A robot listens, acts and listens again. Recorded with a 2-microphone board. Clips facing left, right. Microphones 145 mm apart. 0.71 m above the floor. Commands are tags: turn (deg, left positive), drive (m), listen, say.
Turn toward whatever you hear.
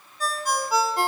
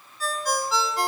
<turn deg="50"/>
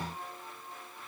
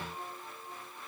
<listen/>
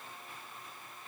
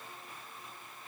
<listen/>
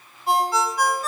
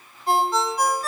<say>Facing the ringtone.</say>